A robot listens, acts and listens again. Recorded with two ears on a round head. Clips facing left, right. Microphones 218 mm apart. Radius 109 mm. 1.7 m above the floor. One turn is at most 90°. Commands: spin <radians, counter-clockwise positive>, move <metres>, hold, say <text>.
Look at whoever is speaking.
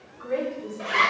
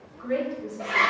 spin -1.05
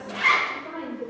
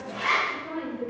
spin -0.52
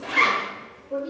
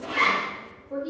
say Found it: a woman speaking, straight ahead, 2 to 4 m away.